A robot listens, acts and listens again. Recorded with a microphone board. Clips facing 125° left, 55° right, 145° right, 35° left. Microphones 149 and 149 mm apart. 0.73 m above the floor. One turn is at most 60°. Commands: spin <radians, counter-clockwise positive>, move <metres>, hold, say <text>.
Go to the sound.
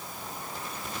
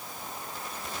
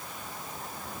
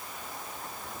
hold
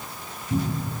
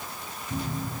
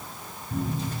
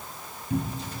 spin 0.70
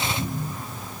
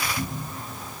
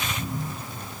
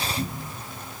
move 1.0
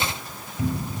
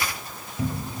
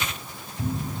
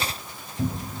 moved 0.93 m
move 1.0
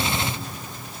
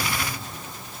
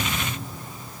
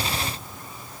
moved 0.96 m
hold
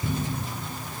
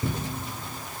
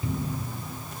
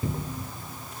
move 1.0
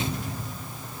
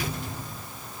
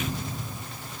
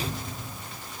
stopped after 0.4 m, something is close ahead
spin -0.17
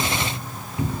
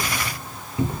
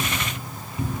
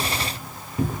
say Arrived at the cupboard door, straight ahead.